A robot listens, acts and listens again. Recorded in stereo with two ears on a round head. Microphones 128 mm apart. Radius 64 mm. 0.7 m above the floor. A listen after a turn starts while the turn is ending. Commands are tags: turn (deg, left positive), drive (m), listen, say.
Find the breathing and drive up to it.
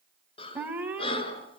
<turn deg="40"/>
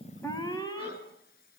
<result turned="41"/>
<listen/>
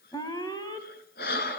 <turn deg="100"/>
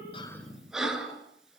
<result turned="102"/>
<drive m="1.0"/>
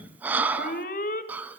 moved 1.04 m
<turn deg="-10"/>
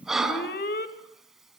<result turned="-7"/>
<drive m="1.0"/>
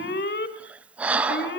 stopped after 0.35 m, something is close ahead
<turn deg="-10"/>
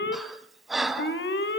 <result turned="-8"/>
<say>Arrived at the breathing, straight ahead.</say>